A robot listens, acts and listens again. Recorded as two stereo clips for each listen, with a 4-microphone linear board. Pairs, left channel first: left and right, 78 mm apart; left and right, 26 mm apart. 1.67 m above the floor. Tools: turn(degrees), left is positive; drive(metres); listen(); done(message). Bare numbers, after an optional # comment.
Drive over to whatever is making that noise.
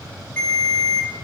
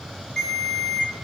# The ringtone: about 20° left or 160° left.
turn(20)
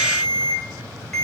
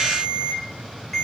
drive(1.0)
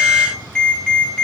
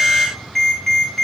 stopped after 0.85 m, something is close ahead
# The ringtone is now 15° left.
turn(15)
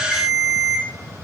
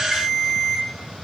done("I am next to the ringtone.")